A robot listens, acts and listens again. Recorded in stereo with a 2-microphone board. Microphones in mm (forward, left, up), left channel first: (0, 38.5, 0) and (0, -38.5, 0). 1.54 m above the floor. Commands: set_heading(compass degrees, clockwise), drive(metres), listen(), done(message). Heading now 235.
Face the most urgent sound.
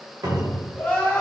set_heading(215)
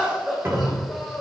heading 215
done("Facing the crying.")